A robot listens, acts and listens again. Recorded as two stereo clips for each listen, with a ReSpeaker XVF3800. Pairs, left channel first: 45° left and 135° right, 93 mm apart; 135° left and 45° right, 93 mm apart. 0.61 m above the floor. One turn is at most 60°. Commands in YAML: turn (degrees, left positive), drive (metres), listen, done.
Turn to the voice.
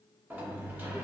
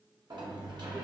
listen: true
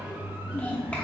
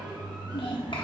turn: 60
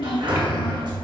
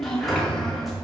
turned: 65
turn: 50
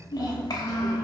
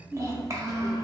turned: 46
done: "Found it: a child speaking, straight ahead."